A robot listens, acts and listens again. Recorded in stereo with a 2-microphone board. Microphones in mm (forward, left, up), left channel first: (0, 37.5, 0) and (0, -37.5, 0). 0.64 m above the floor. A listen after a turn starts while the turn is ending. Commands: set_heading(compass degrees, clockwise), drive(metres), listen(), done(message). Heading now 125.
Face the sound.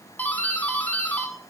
set_heading(105)
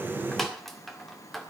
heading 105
done("Facing the doorbell.")